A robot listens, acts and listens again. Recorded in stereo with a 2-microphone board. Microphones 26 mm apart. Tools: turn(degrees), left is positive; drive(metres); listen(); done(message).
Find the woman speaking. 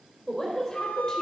turn(degrees=25)
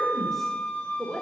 turn(degrees=30)
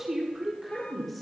done("Found it: a woman speaking, straight ahead, 1 to 2 m away.")